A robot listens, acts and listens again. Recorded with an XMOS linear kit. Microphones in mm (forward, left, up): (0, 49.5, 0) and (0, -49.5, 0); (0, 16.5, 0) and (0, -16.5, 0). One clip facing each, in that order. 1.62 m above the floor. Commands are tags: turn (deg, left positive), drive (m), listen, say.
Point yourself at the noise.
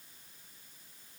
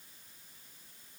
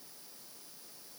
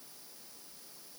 <listen/>
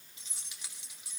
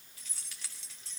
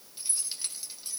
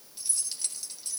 <turn deg="30"/>
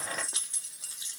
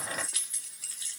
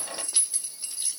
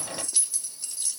<turn deg="20"/>
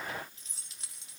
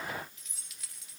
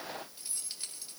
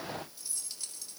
<turn deg="150"/>
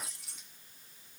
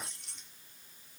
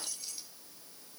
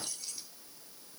<say>Facing the keys jangling, 2 to 4 m away.</say>